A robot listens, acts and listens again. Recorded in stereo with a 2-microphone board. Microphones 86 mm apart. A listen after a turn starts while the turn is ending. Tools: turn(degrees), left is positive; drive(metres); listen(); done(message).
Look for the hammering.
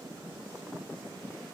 listen()
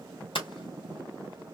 turn(degrees=70)
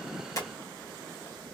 listen()
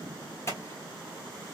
turn(degrees=35)
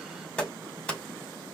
turn(degrees=15)
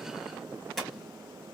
done("Found it: hammering, straight ahead.")